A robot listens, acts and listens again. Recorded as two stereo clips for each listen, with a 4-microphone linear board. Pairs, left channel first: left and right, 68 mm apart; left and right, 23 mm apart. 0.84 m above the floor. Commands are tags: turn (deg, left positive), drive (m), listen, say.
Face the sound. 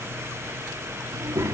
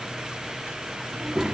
<turn deg="-45"/>
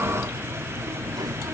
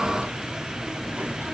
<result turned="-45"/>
<turn deg="-90"/>
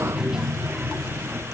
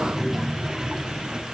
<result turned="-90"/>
<turn deg="-10"/>
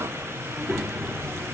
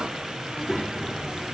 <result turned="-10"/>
<say>Facing the child speaking, 1 to 2 m away.</say>